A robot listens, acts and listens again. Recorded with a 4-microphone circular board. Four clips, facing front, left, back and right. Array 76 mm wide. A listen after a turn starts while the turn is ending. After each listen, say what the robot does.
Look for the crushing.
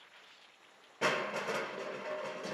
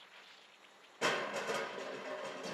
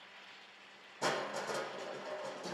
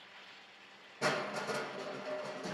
Turn 10° left.
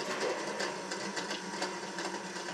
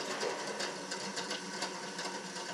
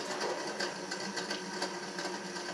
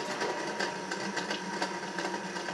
Keep listening.
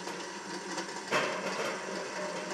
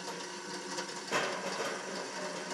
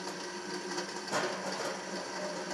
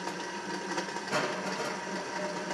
Facing the crushing.